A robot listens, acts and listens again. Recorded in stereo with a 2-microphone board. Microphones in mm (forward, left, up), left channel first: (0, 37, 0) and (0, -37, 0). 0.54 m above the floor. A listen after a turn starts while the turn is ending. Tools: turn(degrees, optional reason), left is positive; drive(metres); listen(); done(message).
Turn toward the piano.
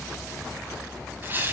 listen()
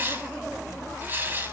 listen()
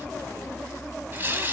done("I can't make out a piano, only tearing paper.")